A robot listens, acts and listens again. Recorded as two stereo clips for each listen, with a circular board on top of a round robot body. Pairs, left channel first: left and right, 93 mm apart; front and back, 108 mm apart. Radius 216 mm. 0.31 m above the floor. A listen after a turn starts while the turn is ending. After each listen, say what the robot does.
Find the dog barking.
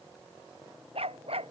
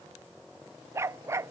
Turn 115° right.
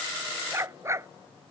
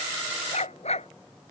Turn 30° right.
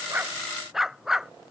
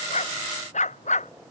Facing the dog barking.